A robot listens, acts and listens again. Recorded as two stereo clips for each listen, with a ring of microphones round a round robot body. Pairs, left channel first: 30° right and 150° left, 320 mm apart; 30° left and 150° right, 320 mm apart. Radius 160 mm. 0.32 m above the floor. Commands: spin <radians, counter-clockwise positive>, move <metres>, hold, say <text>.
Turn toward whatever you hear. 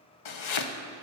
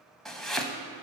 spin -1.05
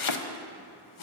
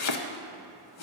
spin -0.17
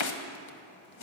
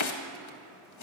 say Found it: chopping, straight ahead, under 1 m away.